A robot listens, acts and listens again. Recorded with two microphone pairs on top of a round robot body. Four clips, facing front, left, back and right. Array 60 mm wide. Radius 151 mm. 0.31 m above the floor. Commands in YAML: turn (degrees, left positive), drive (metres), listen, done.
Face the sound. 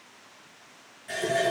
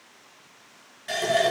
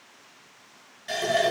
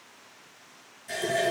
turn: 105
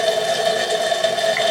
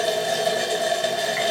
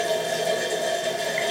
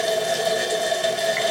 done: "Found it: a running tap, straight ahead."